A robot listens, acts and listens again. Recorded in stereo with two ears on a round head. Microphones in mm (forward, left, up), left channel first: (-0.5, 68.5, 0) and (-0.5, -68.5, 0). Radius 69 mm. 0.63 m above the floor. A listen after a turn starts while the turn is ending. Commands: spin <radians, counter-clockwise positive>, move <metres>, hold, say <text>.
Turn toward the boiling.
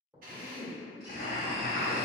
spin 0.96
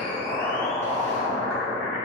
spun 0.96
say Facing the boiling, 1 to 2 m away.